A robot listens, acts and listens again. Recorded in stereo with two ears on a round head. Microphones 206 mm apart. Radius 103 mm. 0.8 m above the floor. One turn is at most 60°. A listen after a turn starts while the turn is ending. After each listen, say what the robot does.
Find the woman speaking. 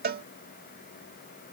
Keep listening.
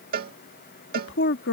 Turn 55° left.
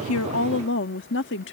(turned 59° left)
Turn 60° left.
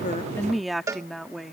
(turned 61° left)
Found it: a woman speaking, straight ahead.